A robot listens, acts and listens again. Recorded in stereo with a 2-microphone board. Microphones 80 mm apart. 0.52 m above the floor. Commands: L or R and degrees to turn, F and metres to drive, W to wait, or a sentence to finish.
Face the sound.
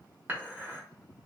R25
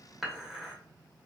Facing the dishes clattering, under 1 m away.